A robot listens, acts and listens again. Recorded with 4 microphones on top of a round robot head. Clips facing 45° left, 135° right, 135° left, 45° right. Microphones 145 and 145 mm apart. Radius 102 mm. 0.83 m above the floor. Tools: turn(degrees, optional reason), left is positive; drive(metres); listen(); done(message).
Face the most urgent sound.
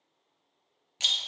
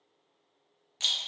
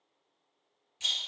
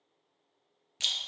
listen()
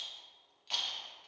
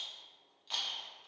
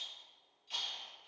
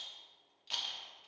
listen()
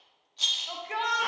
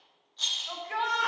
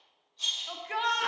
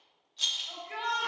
turn(degrees=115, reason="The shout: 115° left.")
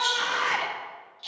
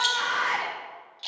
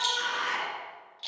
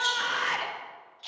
turn(degrees=-20, reason="The shout is now 20° right.")
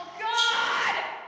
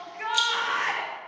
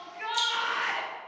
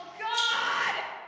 turn(degrees=-10, reason="The shout is now 10° right.")
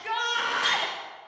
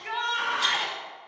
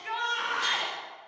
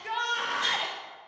done("Facing the shout, under 1 m away.")